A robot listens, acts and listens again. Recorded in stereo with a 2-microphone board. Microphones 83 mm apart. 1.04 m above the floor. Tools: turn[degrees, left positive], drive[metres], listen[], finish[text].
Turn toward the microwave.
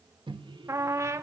Action: turn[-90]
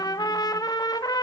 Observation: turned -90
Action: listen[]
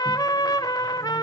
Action: listen[]
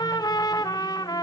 Action: finish[Facing where the microwave came from. I can't hear it now.]